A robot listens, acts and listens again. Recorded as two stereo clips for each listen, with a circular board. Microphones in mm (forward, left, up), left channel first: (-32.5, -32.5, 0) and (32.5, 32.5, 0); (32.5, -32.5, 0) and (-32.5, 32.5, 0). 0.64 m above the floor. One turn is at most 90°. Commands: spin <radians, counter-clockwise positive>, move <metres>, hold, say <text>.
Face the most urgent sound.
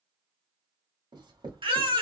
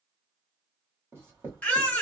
spin 0.52
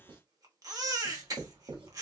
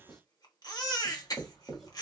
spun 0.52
say Facing the baby crying, under 1 m away.